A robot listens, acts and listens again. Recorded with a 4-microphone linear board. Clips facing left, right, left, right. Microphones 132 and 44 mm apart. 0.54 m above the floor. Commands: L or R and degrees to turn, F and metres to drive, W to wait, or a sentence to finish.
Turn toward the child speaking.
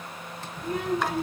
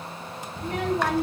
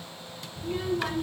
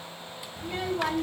R75
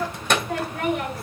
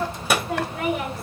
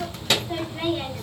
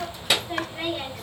Facing the child speaking, 2 to 4 m away.